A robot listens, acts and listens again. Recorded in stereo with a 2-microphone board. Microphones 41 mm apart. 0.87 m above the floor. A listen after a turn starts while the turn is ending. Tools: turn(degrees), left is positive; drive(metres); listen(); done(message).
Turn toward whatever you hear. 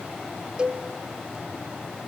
turn(degrees=-20)
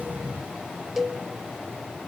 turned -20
done("Facing the cowbell.")